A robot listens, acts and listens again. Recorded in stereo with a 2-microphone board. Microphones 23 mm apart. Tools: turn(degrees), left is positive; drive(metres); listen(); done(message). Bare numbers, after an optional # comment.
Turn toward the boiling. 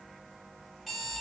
listen()
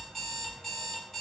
listen()
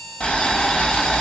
# The boiling: about 50° left or 130° left.
turn(50)
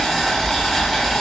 done("Found it: boiling, straight ahead.")